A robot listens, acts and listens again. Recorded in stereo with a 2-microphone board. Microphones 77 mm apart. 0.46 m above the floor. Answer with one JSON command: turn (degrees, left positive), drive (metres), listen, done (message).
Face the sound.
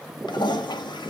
{"turn": 70}
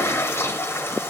{"turn": 30}
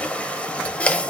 {"turn": 15}
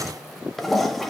{"done": "Facing the toilet flushing, under 1 m away."}